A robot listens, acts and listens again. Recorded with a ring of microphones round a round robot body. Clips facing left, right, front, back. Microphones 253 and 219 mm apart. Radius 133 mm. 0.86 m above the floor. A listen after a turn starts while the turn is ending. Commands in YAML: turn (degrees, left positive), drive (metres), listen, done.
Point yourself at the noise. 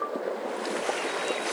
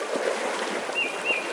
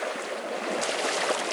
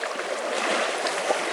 listen: true
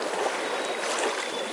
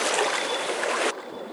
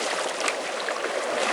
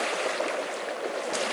listen: true
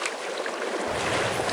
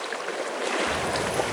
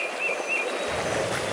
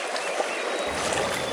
turn: -150
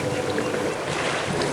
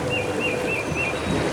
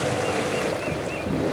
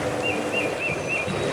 turn: -45
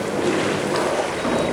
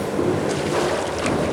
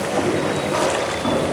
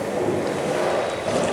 turn: 10
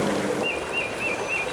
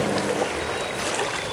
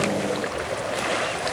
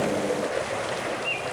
done: "Facing the keys jangling, over 4 m away."